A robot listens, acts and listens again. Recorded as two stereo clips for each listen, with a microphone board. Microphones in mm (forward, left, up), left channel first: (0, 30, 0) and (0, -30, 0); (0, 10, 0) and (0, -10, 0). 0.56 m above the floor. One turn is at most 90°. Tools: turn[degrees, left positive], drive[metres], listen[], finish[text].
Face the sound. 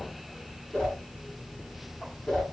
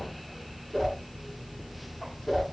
Action: turn[30]
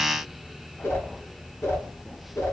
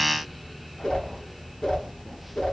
Thought: So it is at 135° left.
Action: turn[90]
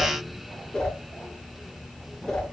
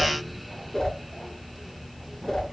Thought: The whoosh is now 15° left.
Action: turn[15]
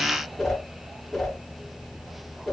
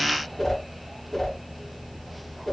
Action: finish[Facing the whoosh.]